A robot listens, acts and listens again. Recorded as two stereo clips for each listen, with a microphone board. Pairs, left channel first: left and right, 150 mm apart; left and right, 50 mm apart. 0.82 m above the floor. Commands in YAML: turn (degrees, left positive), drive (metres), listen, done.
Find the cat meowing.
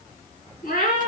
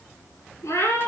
turn: 90
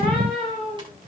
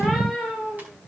done: "Found it: a cat meowing, straight ahead, over 4 m away."